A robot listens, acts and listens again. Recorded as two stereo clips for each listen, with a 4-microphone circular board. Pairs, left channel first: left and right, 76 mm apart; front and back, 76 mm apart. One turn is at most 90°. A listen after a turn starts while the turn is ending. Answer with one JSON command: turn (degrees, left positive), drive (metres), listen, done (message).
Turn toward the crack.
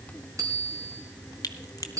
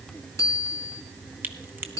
{"turn": 90}
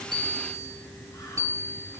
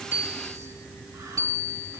{"turn": 30}
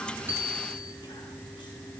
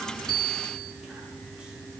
{"done": "Facing where the crack came from. I can't hear it now."}